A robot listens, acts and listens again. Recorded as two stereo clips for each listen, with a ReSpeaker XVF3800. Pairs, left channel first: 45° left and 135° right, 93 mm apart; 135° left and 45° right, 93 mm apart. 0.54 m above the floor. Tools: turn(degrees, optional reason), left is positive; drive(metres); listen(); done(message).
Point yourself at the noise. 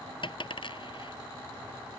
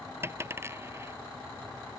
turn(degrees=15, reason="The dropped coin: 15° left.")
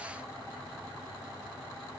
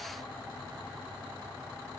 done("I heard a dropped coin from this way, but can't make it out now.")